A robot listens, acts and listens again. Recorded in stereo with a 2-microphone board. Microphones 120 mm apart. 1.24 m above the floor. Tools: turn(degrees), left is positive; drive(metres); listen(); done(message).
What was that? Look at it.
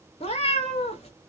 turn(degrees=60)
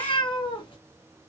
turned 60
turn(degrees=50)
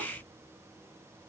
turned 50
listen()
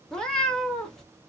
done("Found it: a cat meowing, straight ahead, 1 to 2 m away.")